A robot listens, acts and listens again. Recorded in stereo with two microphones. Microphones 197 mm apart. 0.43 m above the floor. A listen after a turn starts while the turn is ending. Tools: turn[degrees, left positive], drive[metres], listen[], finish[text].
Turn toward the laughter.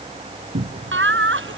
Action: turn[-90]
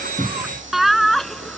Action: finish[Found it: laughter, straight ahead.]